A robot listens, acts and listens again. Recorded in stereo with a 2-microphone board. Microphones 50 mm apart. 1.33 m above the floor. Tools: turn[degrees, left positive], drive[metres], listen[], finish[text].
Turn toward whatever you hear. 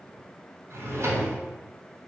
Thought: The drawer: about 55° right or 125° right.
Action: turn[-55]
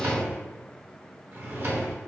Thought: So it is at 55° right.
Action: turn[-55]
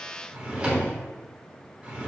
Thought: The drawer is now 25° right.
Action: turn[-25]
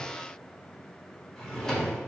Thought: The drawer is now 10° left.
Action: turn[10]
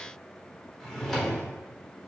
Action: finish[Found it: a drawer, straight ahead.]